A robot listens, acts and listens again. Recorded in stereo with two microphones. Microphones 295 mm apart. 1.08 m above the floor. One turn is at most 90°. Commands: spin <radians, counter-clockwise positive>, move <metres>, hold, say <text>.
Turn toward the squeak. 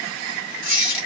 spin 0.79
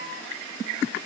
hold
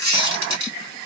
spin 1.48
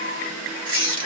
spin 0.35
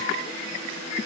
hold
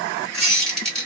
say Facing the squeak.